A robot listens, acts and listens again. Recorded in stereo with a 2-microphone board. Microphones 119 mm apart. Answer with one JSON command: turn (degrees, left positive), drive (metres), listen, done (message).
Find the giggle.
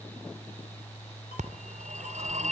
{"listen": true}
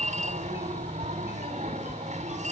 {"listen": true}
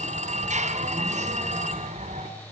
{"done": "I can't make out a giggle to turn to."}